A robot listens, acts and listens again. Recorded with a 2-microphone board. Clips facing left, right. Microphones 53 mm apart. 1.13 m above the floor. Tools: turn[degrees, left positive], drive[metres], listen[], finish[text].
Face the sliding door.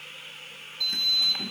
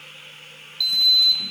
Thought: The sliding door: about 40° left or 140° left.
Action: turn[40]
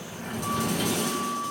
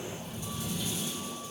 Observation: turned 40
Thought: So it is at 100° left.
Action: turn[100]
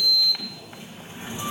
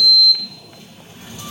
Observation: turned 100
Thought: The sliding door is now 25° left.
Action: turn[25]
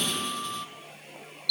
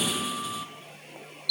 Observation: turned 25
Action: finish[Facing the sliding door.]